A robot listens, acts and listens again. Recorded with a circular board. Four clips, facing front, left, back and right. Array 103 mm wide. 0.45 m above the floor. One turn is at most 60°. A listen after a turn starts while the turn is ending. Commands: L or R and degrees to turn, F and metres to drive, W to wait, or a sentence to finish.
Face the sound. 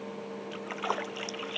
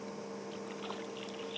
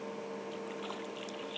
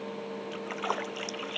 R40
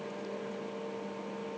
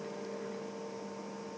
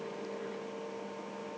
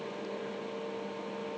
I heard a splash from this way, but can't make it out now.